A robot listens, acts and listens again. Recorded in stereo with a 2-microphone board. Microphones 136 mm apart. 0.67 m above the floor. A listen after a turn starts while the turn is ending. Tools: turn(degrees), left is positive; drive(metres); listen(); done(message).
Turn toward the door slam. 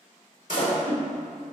turn(degrees=75)
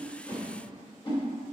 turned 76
listen()
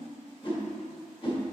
done("I heard a door slam, but can't make it out now. It was about 5° right or 30° left.")